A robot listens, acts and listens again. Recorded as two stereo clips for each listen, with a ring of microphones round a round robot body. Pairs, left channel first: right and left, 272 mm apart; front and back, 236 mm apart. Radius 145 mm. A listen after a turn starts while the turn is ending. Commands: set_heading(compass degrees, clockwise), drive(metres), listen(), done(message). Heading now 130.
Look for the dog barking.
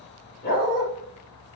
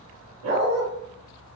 set_heading(275)
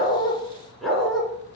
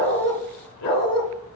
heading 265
done("Facing the dog barking, 2 to 4 m away.")